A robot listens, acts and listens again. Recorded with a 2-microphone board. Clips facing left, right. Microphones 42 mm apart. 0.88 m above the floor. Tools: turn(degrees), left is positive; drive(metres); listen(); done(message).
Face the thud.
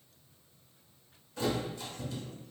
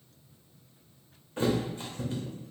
turn(degrees=-35)
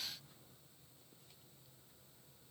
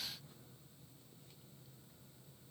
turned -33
listen()
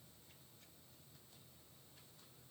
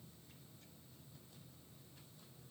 done("I heard a thud, but can't make it out now. It was about straight ahead or 115° right.")